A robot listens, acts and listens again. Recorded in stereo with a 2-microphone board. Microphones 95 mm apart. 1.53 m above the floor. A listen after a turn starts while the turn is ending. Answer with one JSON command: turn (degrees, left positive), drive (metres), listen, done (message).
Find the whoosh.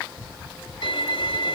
{"listen": true}
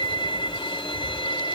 {"listen": true}
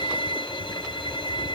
{"done": "I can't make out a whoosh, only a violin."}